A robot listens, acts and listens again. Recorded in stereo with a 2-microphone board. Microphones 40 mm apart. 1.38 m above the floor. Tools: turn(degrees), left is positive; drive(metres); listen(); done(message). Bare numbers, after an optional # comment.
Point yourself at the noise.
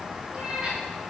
# The cat meowing: about 20° right or 160° right.
turn(-20)
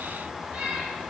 # So it is at 145° right.
turn(-145)
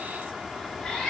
# The cat meowing is now 20° left.
turn(20)
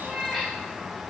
done("Facing the cat meowing.")